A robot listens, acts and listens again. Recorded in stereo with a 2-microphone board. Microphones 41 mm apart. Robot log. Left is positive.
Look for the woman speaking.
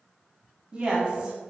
note: The woman speaking: about 20° right or 160° right.
cmd yaw -20
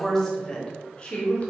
note: So it is at 40° left.
cmd yaw +40
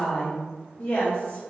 note: The woman speaking is now 50° left.
cmd yaw +50
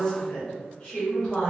note: The woman speaking is now 20° left.
cmd yaw +20
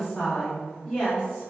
note: The woman speaking is now 10° left.
cmd yaw +10
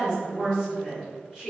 end: Found it: a woman speaking, straight ahead, 2 to 4 m away.